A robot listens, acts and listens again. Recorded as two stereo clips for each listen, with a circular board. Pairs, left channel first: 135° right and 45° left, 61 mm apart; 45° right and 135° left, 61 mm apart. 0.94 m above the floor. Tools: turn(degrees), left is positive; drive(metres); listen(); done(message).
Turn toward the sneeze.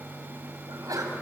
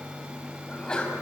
turn(degrees=30)
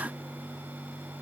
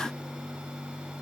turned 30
done("Facing where the sneeze came from. I can't hear it now.")